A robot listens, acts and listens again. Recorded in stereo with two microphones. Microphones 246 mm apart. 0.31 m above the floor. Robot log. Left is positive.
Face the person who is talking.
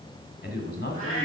note: The man speaking: about 45° left or 135° left.
cmd yaw +45
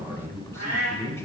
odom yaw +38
note: So it is at 10° left.
cmd yaw +10
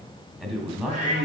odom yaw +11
end: Facing the man speaking, 2 to 4 m away.